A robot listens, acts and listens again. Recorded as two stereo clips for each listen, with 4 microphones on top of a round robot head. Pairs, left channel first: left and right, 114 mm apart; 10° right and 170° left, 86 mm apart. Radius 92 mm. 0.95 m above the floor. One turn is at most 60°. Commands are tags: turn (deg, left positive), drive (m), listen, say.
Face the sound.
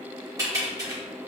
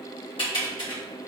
<turn deg="-30"/>
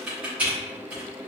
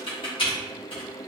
<turn deg="-10"/>
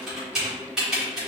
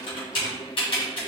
<say>Facing the typing on a keyboard, 1 to 2 m away.</say>